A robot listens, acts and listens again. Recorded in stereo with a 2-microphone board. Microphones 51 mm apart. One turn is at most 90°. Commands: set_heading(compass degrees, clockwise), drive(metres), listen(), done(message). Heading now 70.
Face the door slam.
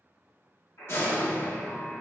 set_heading(15)
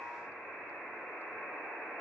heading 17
listen()
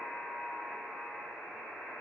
done("I heard a door slam, but can't make it out now. It was about straight ahead or 75° left.")